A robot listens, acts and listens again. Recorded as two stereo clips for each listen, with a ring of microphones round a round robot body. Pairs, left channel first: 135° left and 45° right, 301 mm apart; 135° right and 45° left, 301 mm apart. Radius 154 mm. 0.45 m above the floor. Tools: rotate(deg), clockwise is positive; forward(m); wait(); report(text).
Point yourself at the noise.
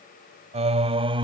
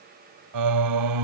rotate(-30)
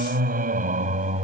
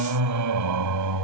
rotate(-20)
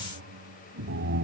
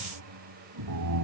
rotate(-10)
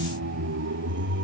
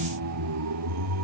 rotate(-10)
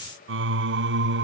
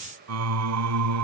rotate(-10)
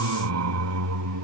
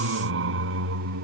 report("Facing the singing.")